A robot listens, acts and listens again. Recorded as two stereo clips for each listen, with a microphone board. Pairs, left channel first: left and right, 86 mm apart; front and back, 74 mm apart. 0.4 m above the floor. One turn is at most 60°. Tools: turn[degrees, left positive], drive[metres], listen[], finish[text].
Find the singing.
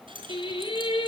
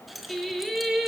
Thought: The singing: 90° left.
Action: turn[60]
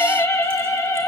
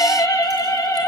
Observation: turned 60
Thought: The singing is now 40° left.
Action: turn[40]
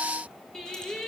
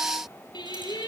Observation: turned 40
Action: finish[Facing the singing, over 4 m away.]